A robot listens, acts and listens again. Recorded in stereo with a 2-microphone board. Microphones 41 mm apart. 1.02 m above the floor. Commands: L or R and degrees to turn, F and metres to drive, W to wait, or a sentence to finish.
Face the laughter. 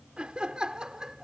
R15
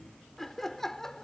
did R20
L10
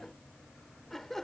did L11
L10
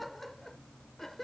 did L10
Found it: laughter, straight ahead.